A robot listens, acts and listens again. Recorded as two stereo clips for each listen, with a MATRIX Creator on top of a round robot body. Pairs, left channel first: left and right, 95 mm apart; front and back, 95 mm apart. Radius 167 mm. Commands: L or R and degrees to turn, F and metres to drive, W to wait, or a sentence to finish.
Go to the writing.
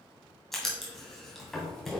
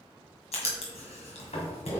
F1.0
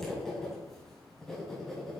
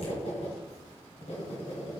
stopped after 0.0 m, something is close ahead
Blocked. The writing is further on, straight ahead.